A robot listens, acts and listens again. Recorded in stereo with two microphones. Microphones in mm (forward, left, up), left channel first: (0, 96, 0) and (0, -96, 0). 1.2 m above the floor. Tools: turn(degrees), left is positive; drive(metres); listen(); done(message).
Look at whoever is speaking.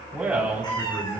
turn(degrees=-30)
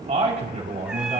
turn(degrees=-140)
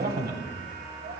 turn(degrees=-60)
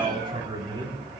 turn(degrees=-25)
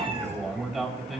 done("Found it: a man speaking, straight ahead, 2 to 4 m away.")